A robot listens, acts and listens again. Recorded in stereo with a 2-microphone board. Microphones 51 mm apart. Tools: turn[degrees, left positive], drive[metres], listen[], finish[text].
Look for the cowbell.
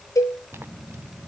Action: turn[90]
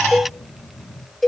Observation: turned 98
Action: finish[Facing the cowbell.]